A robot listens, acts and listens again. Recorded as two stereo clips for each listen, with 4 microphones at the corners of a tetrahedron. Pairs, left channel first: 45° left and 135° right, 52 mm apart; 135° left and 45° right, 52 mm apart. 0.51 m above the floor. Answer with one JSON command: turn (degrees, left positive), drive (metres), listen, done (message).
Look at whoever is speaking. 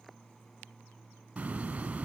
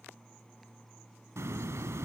{"listen": true}
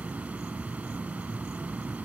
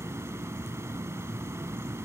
{"listen": true}
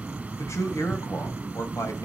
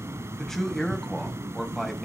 {"turn": 45}
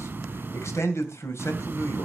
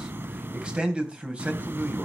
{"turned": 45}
{"turn": 20}
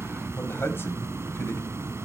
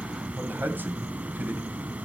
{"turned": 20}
{"listen": true}
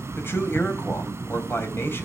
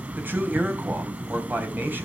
{"done": "Found it: a man speaking, straight ahead, 2 to 4 m away."}